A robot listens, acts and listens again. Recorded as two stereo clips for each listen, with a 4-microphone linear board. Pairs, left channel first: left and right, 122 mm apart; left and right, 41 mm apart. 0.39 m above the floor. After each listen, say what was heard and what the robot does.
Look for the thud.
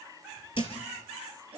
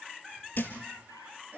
The thud: about 45° left or 135° left. Turn 45° left.
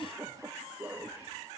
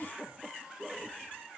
Keep listening.
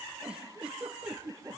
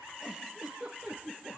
I heard a thud, but can't make it out now. It was about straight ahead or 90° left.